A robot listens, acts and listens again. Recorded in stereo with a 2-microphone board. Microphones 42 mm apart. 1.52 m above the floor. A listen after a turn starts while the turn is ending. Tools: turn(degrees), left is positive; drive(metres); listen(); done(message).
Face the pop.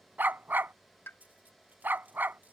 turn(degrees=65)
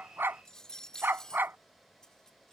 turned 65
listen()
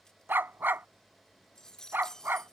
done("I heard a pop, but can't make it out now. It was about straight ahead or 50° left.")